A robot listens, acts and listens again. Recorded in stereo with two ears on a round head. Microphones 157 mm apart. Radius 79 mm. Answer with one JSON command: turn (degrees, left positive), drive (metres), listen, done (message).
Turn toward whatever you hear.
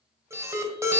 {"turn": -15}
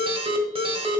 {"turn": -150}
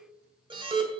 {"turn": -25}
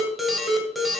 {"done": "Facing the alarm."}